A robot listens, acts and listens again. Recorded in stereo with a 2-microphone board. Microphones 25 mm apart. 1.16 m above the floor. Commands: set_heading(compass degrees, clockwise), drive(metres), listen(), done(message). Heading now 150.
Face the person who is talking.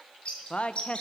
set_heading(105)
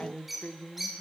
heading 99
set_heading(24)
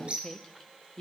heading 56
set_heading(26)
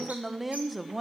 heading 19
done("Facing the woman speaking.")